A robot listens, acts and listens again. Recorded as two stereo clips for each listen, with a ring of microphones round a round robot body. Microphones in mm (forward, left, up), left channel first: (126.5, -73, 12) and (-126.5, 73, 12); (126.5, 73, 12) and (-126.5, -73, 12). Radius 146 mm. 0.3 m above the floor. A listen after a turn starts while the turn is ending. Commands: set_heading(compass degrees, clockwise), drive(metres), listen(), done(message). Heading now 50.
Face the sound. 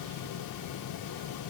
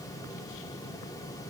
listen()
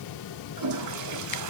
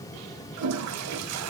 set_heading(235)
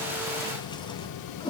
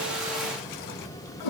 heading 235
set_heading(190)
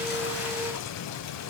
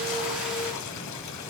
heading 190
listen()
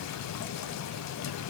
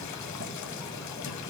listen()
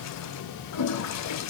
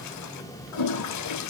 done("Found it: a toilet flushing, straight ahead.")